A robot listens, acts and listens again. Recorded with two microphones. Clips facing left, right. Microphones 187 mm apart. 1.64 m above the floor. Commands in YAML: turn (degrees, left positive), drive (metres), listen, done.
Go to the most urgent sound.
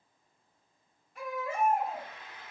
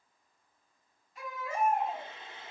turn: 65
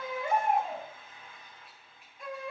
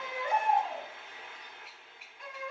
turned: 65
turn: 45
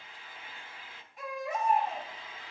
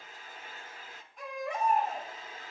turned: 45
drive: 1.0
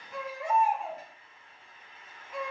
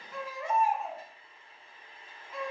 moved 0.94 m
turn: 15
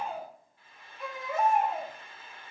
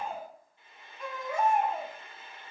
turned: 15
drive: 1.0
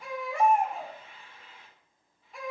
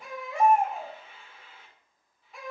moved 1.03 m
drive: 1.0
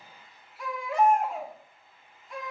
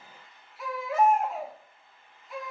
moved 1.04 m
drive: 1.0
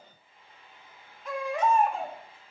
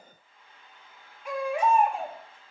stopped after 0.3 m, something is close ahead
turn: -15
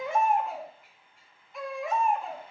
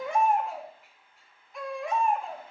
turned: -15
done: "Arrived at the baby crying, straight ahead."